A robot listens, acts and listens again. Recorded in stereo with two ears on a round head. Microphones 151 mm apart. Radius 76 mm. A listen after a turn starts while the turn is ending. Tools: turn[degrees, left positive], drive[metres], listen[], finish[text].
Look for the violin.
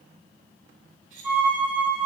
Action: turn[-30]
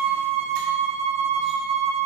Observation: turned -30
Thought: So it is at 140° right.
Action: turn[-140]
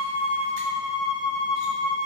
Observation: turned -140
Action: finish[Facing the violin, 1 to 2 m away.]